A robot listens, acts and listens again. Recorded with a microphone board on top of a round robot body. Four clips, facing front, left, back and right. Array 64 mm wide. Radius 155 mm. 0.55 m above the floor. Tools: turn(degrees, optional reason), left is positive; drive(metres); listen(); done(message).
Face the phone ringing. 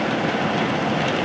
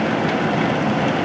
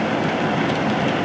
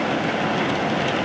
listen()
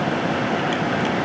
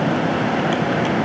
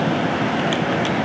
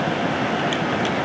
listen()
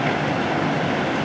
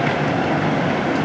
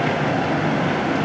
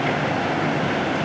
done("I can't make out a phone ringing.")